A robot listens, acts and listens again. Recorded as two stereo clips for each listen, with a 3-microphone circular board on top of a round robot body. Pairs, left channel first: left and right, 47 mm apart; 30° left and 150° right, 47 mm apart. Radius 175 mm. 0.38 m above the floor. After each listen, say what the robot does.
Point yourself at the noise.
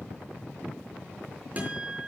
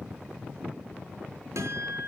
Turn 150° right.
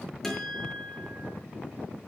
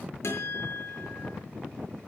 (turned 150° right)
Facing the guitar.